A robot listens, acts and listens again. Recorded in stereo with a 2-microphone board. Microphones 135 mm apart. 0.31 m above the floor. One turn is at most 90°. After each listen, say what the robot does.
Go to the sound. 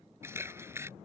Turn 20° right.
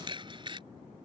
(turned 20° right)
Turn 90° right.
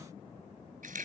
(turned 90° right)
Turn 90° right.
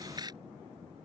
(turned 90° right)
Turn 30° right.
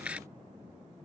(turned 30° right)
Turn 10° right.
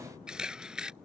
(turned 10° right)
Drive 1.0 m forward.
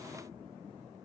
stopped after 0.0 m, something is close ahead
Keep listening.
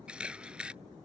Turn 10° right.
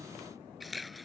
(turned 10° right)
Blocked. The camera shutter is further on, straight ahead.